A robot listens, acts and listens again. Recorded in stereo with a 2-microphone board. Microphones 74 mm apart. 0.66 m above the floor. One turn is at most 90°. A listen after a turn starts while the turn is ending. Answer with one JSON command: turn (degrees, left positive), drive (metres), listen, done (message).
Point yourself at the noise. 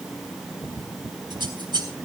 {"turn": -90}
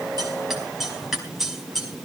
{"done": "Found it: scissors, straight ahead, over 4 m away."}